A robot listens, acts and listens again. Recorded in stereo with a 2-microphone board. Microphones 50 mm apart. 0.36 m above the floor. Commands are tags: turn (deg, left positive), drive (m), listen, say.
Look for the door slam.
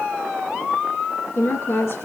<listen/>
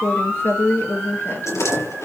<turn deg="90"/>
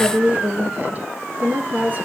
<say>Facing where the door slam came from. I can't hear it now.</say>